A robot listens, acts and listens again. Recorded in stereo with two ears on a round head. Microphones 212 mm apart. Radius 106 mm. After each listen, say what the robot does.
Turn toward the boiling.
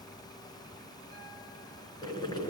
Turn 20° left.
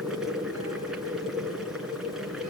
Found it: boiling, straight ahead, 2 to 4 m away.